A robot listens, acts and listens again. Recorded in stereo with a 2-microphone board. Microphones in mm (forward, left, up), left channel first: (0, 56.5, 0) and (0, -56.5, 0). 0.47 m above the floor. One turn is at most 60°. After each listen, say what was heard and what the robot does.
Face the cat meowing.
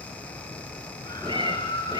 The cat meowing: about 40° right or 140° right. Turn 40° right.
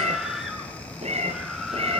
So it is at 120° right. Turn 60° right.
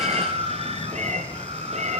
The cat meowing is now 85° right. Turn 60° right.
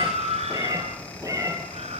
The cat meowing is now 25° right. Turn 25° right.
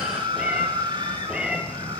Found it: a cat meowing, straight ahead.